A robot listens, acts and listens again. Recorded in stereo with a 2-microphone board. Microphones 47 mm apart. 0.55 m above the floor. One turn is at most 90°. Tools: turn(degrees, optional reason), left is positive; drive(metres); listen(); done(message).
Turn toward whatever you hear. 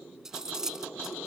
turn(degrees=-30)
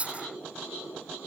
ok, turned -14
turn(degrees=-90, reason="So it is at 150° right.")
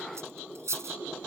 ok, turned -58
turn(degrees=-90, reason="The cutlery clinking is now 90° right.")
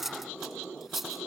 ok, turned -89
done("Facing the cutlery clinking.")